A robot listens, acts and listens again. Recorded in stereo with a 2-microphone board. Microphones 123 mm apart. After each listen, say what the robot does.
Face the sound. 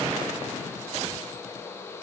Keep listening.
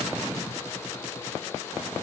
Keep listening.
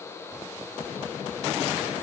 I can't make out anything to turn to.